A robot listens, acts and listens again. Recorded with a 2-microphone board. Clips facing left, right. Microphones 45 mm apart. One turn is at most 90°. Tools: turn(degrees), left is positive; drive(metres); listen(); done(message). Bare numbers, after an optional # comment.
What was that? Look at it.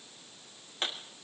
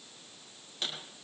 # The pop: about 40° left or 140° left.
turn(40)
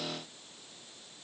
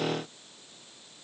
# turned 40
listen()
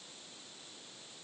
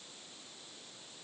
done("I heard a pop, but can't make it out now. It was about straight ahead or 100° left.")